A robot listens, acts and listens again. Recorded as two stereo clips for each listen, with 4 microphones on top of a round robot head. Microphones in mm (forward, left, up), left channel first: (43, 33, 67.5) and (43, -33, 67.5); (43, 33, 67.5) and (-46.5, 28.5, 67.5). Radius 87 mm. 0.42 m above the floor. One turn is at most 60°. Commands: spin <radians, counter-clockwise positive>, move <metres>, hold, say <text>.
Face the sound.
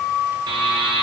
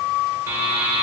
spin -1.05
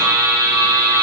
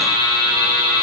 spin -0.87
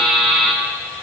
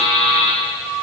say Found it: a buzzer, straight ahead, 1 to 2 m away.